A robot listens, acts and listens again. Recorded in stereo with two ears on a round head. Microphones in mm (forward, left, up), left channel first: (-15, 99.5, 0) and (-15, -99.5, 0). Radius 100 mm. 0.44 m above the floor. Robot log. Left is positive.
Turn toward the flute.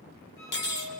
cmd yaw +90
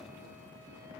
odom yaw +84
cmd idle
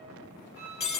note: The flute is now 10° right.
cmd yaw -10
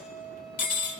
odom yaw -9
end: Facing the flute.